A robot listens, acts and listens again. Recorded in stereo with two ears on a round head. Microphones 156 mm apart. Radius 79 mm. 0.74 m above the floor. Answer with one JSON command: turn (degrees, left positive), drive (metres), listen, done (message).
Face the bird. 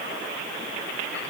{"listen": true}
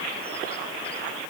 {"listen": true}
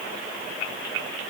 {"done": "I can't make out a bird."}